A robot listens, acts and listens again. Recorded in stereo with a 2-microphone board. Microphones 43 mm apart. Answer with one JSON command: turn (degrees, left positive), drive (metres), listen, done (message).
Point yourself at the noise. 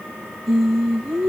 {"turn": -30}
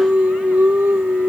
{"turn": -140}
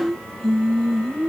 {"turn": 25}
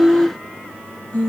{"turn": 35}
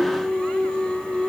{"turn": 20}
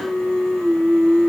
{"turn": 10}
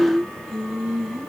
{"done": "Facing the singing, 1 to 2 m away."}